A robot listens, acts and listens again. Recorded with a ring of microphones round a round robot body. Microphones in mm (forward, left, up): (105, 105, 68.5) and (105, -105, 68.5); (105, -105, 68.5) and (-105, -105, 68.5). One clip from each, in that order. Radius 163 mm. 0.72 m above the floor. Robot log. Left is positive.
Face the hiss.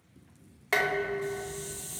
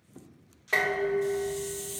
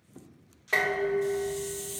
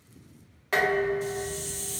note: The hiss: 155° right.
cmd yaw -155
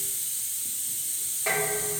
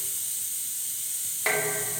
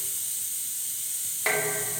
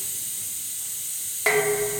end: Found it: a hiss, straight ahead, 1 to 2 m away.